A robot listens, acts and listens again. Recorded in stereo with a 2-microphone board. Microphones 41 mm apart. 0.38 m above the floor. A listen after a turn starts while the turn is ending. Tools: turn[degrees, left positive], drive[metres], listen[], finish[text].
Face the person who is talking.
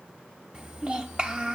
Thought: The child speaking: about 30° right or 150° right.
Action: turn[-30]
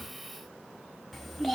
Action: finish[Facing the child speaking.]